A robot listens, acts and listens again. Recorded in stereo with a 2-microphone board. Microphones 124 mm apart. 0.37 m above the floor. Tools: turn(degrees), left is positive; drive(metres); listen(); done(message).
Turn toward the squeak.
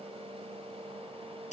listen()
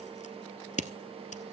listen()
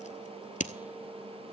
done("I can't make out a squeak, only scissors.")